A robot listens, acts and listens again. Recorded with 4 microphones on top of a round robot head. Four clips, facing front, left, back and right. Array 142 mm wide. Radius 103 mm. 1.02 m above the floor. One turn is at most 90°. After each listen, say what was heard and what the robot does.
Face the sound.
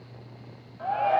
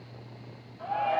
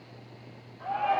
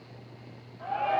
Found it: a shout, straight ahead.